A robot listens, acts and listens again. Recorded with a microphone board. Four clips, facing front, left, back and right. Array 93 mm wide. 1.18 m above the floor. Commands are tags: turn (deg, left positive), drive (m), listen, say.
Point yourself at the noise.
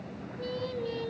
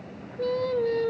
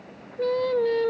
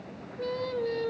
<turn deg="180"/>
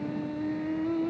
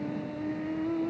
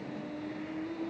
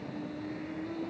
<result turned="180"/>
<turn deg="40"/>
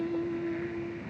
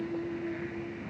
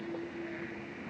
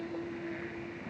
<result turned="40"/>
<turn deg="20"/>
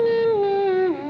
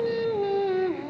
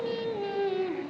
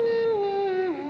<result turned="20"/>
<say>Found it: singing, straight ahead.</say>